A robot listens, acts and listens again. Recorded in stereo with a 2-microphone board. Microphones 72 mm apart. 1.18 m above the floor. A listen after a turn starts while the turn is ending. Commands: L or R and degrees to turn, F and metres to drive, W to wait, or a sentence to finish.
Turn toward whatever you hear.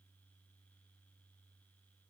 W
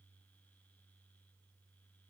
W
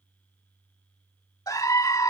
L55
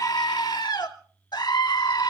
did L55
L75
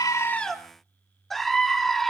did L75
Found it: a scream, straight ahead.